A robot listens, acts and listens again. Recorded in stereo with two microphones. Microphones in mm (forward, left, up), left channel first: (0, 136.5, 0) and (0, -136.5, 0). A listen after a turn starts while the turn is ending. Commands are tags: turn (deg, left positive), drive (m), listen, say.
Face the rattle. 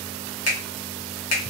<listen/>
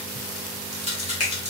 <turn deg="-25"/>
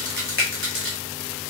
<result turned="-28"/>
<turn deg="-125"/>
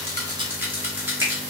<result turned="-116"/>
<say>Found it: a rattle, straight ahead.</say>